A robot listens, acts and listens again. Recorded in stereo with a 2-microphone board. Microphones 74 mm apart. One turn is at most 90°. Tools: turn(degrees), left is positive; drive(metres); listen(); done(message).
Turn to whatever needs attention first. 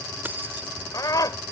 turn(degrees=55)
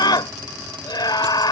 turn(degrees=70)
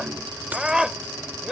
turn(degrees=-10)
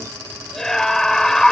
done("Found it: a scream, straight ahead.")